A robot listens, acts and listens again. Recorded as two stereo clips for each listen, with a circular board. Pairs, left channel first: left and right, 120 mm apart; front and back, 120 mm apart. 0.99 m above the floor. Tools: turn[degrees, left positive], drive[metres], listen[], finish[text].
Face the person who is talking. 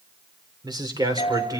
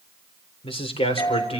Thought: The man speaking: 30° right.
Action: turn[-30]
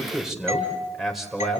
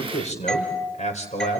Action: finish[Facing the man speaking, over 4 m away.]